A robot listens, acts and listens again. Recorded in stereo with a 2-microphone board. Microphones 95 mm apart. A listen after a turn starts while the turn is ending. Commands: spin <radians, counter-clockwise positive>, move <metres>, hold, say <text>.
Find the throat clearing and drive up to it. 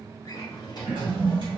spin 1.13
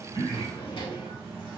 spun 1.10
hold
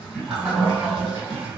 spin 0.61
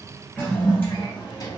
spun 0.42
spin 0.17
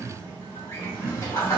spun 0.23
move 1.0
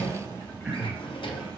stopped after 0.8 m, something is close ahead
spin -0.26
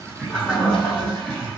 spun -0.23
say Arrived at the throat clearing, straight ahead.